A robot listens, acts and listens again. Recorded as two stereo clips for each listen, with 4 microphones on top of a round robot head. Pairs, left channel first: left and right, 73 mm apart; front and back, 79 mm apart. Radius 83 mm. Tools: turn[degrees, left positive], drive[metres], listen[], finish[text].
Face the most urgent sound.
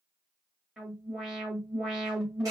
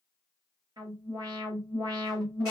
Thought: The alarm: 170° right.
Action: turn[-170]
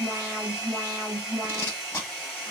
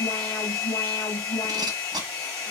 Thought: The alarm is now 30° right.
Action: turn[-30]
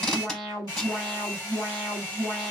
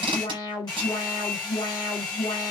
Action: finish[Facing the alarm.]